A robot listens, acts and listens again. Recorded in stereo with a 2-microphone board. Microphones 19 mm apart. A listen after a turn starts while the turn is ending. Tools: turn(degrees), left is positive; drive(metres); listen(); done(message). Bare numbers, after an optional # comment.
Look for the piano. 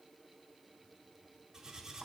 listen()
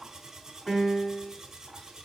# The piano: about 45° left or 135° left.
turn(45)
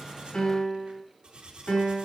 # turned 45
# So it is at 90° left.
turn(90)
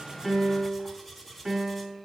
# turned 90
# The piano is now 15° right.
turn(-15)
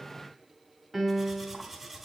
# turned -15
done("Facing the piano, 1 to 2 m away.")